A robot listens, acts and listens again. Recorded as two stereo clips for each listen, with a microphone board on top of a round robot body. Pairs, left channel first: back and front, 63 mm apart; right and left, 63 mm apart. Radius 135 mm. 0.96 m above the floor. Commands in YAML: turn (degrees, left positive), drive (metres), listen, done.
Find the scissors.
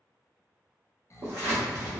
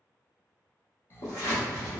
turn: -60
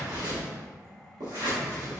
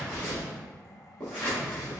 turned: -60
turn: -15
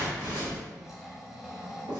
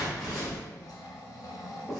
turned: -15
done: "Facing the scissors."